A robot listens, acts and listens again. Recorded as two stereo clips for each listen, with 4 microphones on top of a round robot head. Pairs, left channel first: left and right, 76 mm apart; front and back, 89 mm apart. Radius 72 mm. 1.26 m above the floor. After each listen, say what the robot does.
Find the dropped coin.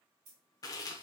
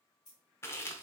Turn 60° right.
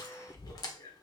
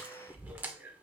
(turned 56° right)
I heard a dropped coin from this way, but can't make it out now.